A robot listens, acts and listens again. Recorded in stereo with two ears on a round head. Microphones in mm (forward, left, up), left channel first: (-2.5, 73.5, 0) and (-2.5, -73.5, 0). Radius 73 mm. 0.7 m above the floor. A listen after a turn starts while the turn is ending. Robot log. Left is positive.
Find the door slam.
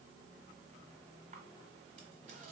cmd idle
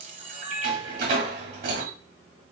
note: The door slam: about 60° right or 120° right.
cmd yaw -60
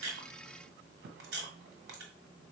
cmd idle
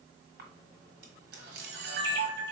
end: I heard a door slam, but can't make it out now. It was about straight ahead or 60° right.